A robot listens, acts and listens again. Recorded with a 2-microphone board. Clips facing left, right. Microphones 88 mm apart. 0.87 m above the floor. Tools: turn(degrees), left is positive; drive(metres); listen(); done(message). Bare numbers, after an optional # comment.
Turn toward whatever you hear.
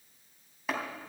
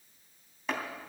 turn(30)
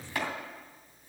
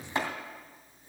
# So it is at 25° right.
turn(-25)
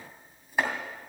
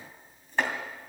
# The chopping is now 10° left.
turn(10)
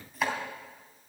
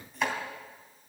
done("Found it: chopping, straight ahead.")